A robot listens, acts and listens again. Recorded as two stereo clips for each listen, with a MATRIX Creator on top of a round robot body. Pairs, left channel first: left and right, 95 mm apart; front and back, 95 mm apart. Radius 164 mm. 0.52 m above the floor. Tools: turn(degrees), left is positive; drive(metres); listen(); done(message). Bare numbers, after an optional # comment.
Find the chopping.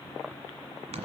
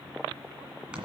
listen()
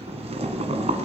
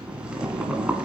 listen()
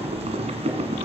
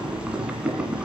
done("I can't make out chopping, only boiling.")